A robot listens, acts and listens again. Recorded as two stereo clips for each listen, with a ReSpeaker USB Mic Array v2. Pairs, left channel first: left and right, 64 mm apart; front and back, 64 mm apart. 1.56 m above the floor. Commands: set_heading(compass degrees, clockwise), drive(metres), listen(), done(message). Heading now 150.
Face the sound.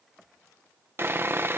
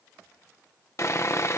set_heading(190)
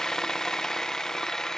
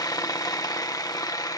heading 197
set_heading(187)
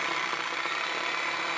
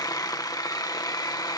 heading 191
done("Facing the sawing.")